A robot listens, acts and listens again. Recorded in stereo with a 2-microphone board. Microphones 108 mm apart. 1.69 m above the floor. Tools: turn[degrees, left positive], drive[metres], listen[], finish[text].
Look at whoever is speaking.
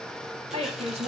Action: turn[-90]
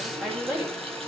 Thought: So it is at 15° right.
Action: turn[-15]
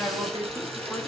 Action: finish[Found it: a woman speaking, straight ahead.]